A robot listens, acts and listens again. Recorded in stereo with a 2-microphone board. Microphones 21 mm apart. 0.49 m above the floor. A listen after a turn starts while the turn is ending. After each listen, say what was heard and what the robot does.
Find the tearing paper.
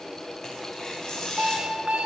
The tearing paper: about 25° left or 155° left. Turn 25° left.
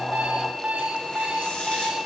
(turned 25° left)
Keep listening.
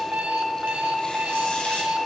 Keep listening.
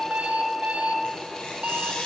So it is at 125° left. Turn 125° left.
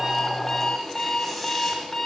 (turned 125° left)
Keep listening.
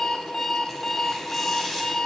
The tearing paper is now 15° left. Turn 15° left.
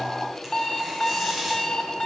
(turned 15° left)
Found it: tearing paper, straight ahead, 1 to 2 m away.